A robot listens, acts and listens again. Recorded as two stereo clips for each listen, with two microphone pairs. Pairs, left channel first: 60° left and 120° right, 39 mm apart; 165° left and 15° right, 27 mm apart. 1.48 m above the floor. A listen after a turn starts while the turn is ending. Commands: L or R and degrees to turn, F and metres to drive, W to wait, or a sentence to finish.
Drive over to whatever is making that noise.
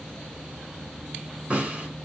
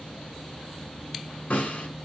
L180
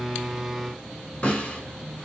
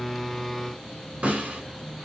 F1.0
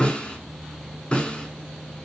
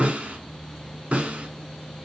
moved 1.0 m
F1.0
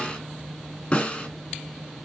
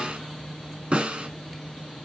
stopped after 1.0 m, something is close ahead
L10
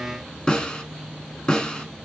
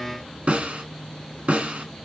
I am next to the snare drum.